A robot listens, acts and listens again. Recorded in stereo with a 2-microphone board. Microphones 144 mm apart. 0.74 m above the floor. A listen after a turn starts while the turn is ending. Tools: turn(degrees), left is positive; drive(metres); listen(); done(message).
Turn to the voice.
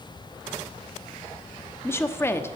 turn(degrees=15)
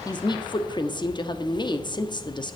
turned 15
turn(degrees=150)
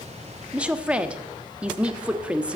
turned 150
turn(degrees=-10)
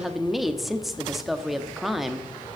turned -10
done("Found it: a woman speaking, straight ahead.")